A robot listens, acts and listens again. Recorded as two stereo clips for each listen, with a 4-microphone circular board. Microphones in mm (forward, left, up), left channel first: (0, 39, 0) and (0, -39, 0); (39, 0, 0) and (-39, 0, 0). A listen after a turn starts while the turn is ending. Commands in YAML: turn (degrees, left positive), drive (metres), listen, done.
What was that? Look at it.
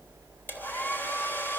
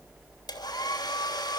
turn: 25
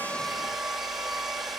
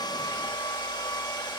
done: "Facing the hair dryer."